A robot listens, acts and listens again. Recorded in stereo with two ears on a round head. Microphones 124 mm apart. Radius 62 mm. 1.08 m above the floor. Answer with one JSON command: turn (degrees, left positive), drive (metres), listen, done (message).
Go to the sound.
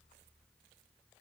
{"listen": true}
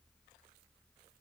{"listen": true}
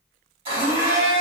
{"turn": -40}
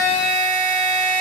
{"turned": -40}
{"turn": -95}
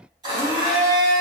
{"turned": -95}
{"turn": -30}
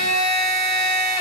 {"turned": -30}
{"drive": 1.0}
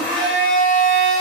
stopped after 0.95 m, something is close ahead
{"turn": 10}
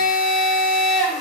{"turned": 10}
{"done": "Arrived at the blender, straight ahead."}